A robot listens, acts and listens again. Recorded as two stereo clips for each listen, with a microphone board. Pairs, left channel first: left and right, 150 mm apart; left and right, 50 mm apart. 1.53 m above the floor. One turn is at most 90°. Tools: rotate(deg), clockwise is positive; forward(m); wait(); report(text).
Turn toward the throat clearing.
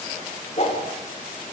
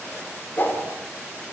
wait()
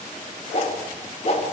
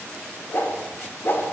wait()
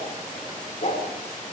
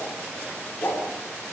report("I can't make out throat clearing, only a whoosh.")